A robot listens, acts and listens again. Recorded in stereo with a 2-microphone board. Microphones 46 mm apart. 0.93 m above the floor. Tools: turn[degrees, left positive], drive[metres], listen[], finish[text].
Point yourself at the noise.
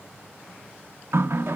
Thought: The running tap: about 65° right or 115° right.
Action: turn[-65]
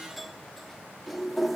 Action: finish[Facing the running tap.]